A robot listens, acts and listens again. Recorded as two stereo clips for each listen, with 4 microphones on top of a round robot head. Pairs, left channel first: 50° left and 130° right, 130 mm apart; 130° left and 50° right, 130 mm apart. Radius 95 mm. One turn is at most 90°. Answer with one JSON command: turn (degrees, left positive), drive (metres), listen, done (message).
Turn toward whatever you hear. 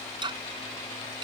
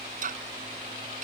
{"turn": -75}
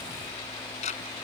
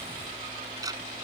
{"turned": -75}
{"turn": 15}
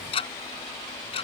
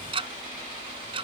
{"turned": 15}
{"done": "Facing the ticking."}